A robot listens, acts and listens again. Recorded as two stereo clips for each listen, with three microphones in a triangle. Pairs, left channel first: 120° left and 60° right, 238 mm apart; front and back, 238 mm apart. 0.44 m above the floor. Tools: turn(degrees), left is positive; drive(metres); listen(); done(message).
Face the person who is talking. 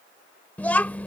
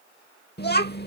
turn(degrees=40)
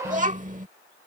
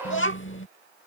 turn(degrees=-10)
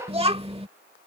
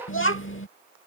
done("Facing the child speaking.")